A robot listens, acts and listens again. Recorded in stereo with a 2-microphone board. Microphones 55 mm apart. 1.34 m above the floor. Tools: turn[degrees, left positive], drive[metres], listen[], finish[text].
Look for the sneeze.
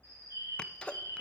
Thought: The sneeze: about 20° left or 160° left.
Action: turn[20]
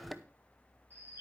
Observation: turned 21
Action: finish[Facing the sneeze, under 1 m away.]